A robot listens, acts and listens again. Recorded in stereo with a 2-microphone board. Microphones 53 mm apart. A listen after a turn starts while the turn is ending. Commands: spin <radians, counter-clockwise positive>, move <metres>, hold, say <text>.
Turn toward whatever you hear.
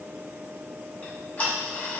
spin 0.52
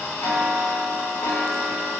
spin 2.01
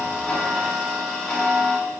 say Facing the ticking, 1 to 2 m away.